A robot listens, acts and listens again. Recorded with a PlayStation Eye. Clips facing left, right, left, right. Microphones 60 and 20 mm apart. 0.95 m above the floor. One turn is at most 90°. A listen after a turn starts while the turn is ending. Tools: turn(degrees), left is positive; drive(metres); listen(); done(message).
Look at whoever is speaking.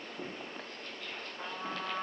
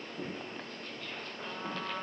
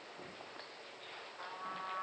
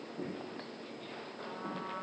listen()
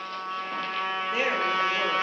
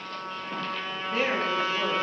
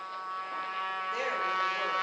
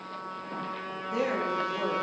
turn(degrees=30)
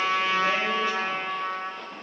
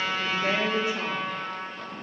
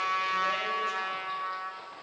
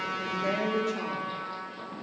turn(degrees=-20)
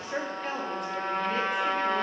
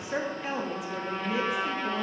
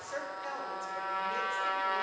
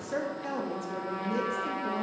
done("Found it: a woman speaking, straight ahead.")